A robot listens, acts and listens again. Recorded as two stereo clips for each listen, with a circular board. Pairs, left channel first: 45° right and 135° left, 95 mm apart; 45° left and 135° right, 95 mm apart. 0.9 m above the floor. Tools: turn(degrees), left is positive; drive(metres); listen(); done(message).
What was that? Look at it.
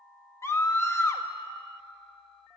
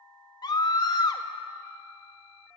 turn(degrees=10)
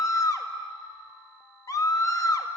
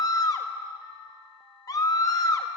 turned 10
done("Found it: a scream, straight ahead, 1 to 2 m away.")